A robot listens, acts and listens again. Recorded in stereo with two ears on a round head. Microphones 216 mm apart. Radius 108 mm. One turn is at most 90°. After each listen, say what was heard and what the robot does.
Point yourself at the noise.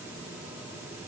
Keep listening.
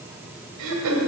Turn 90° right.
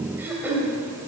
So it is at 10° right. Turn 10° right.
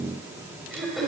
Facing the throat clearing.